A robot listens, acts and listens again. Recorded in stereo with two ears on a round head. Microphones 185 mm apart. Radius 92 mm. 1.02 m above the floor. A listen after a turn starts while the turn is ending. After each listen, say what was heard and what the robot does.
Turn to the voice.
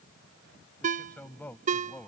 Turn 30° left.
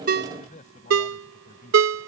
So it is at 140° left. Turn 140° left.
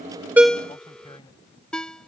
The man speaking is now 25° left. Turn 25° left.
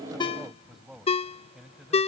Facing the man speaking.